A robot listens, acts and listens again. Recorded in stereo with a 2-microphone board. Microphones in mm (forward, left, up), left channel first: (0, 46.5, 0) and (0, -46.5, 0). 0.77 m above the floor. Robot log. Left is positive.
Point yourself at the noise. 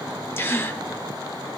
note: The gasp: about 25° left or 155° left.
cmd yaw +25
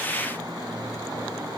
cmd idle
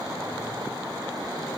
end: I heard a gasp, but can't make it out now. It was about straight ahead or 130° left.